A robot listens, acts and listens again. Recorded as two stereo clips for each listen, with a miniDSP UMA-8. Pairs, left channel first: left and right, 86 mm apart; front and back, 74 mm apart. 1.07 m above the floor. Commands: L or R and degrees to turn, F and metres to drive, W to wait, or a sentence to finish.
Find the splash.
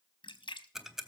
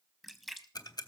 L90
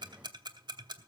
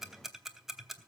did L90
Facing where the splash came from. I can't hear it now.